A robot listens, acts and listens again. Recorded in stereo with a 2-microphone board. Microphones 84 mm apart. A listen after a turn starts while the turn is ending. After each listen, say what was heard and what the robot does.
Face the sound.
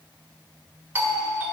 The doorbell: about 20° right or 160° right. Turn 20° right.
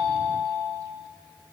Facing the doorbell.